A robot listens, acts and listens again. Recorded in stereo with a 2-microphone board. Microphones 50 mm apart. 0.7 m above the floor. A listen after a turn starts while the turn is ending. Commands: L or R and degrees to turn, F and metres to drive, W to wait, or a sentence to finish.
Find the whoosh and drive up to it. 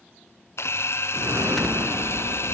R90
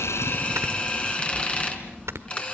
F1.0
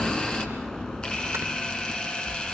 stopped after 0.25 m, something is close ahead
L10
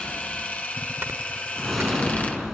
Something is in my way. I am facing the whoosh but have not reached it.